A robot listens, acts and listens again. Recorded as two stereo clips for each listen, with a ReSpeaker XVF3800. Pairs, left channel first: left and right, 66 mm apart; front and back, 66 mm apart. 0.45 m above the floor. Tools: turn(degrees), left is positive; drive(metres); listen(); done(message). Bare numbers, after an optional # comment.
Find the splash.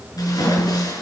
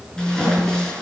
# The splash: 80° left.
turn(80)
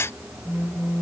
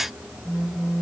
done("Facing where the splash came from. I can't hear it now.")